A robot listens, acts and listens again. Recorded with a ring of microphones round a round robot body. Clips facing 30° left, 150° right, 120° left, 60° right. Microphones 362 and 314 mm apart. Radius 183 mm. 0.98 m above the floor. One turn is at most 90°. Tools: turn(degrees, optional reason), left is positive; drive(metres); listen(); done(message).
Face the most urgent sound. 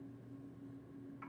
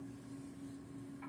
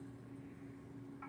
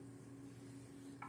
listen()
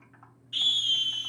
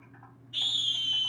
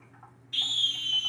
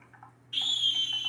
turn(degrees=40, reason="The scream: 40° left.")
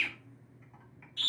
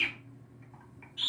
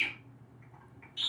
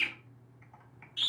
done("Facing the scream.")